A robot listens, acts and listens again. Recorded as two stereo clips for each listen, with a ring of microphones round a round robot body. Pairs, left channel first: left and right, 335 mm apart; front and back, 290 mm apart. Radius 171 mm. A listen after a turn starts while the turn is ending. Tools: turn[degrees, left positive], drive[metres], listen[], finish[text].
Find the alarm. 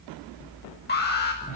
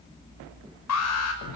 Thought: The alarm: 30° left.
Action: turn[30]
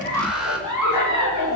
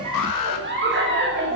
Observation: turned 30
Action: finish[Facing the alarm, over 4 m away.]